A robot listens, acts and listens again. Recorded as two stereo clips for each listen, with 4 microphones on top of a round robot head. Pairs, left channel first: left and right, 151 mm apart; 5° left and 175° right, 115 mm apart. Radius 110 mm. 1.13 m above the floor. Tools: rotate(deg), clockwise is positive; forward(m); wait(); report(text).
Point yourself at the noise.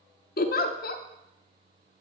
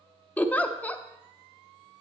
rotate(-85)
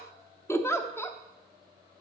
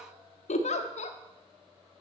rotate(-15)
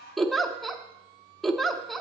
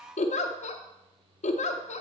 report("Found it: a giggle, straight ahead, under 1 m away.")